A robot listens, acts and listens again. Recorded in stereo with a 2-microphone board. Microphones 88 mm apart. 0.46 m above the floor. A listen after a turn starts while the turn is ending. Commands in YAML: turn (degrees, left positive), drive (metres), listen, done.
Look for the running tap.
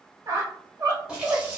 turn: -30
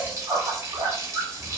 turn: -145
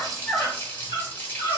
turn: 20
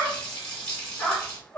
turn: 10
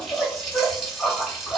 done: "Facing the running tap, 1 to 2 m away."